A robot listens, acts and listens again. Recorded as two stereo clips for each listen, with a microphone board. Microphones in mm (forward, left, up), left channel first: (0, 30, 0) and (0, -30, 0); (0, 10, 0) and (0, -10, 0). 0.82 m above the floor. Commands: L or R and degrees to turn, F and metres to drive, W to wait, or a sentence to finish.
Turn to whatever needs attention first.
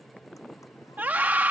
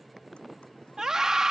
R30
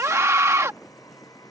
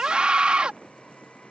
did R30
R115
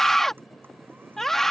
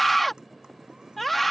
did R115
Found it: a scream, straight ahead.